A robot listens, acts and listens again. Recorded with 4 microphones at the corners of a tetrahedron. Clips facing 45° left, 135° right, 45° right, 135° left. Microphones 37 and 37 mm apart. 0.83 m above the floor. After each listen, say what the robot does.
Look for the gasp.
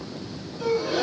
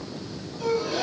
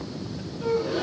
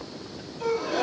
Turn 125° left.
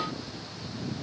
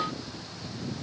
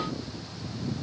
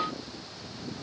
I heard a gasp from this way, but can't make it out now.